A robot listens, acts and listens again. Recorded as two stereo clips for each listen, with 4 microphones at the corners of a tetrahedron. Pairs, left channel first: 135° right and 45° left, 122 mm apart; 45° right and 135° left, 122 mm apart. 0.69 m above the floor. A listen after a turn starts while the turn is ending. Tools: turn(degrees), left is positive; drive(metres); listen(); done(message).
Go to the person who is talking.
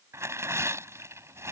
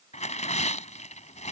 listen()
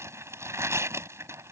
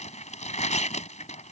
listen()
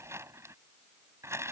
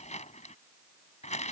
done("I can't make out anyone speaking to turn to.")